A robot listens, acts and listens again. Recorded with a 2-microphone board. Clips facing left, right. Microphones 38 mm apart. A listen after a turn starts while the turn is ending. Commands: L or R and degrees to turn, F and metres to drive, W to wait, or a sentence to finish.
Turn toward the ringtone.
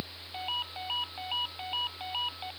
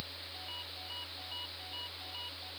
L60
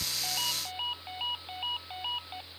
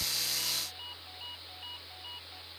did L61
L60
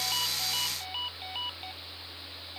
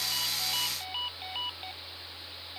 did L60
Found it: a ringtone, straight ahead.